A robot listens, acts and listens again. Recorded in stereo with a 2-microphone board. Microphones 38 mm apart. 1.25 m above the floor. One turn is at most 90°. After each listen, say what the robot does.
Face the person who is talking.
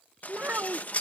Turn 55° right.
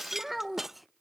Found it: a child speaking, straight ahead.